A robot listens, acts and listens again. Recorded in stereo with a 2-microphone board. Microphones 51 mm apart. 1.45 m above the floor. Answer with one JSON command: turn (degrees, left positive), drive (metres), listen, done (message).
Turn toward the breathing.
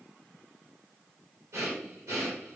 {"turn": -90}
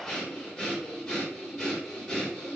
{"done": "Found it: breathing, straight ahead."}